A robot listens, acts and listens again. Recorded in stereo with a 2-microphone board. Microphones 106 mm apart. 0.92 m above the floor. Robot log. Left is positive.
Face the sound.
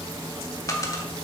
note: The dropped coin: about 35° left or 145° left.
cmd yaw +35
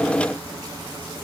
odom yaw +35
cmd idle
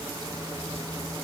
end: I heard a dropped coin, but can't make it out now. It was about straight ahead or 110° left.